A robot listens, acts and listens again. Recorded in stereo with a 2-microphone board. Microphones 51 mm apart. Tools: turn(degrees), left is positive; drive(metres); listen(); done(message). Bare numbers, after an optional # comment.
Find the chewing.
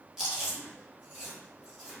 turn(-30)
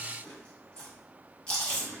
# So it is at 15° left.
turn(15)
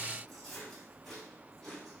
done("Found it: chewing, straight ahead, 1 to 2 m away.")